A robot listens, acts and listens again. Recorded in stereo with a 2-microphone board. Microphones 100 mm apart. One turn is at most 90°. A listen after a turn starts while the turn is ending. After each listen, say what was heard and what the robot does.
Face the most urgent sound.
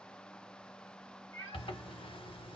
Keep listening.
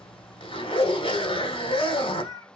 Keep listening.
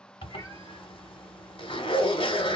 I can't make out anything urgent, only a cat meowing and a zipper.